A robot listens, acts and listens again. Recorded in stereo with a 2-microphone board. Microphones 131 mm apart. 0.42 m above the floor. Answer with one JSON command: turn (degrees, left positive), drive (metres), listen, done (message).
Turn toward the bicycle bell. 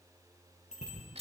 {"turn": 60}
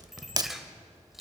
{"done": "Found it: a bicycle bell, straight ahead, over 4 m away."}